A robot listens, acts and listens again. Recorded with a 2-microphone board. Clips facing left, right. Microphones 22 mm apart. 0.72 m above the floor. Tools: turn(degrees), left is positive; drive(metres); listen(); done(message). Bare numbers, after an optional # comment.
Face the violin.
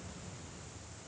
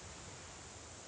listen()
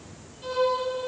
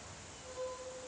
turn(90)
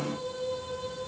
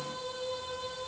# So it is at 15° right.
turn(-15)
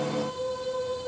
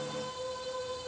done("Facing the violin.")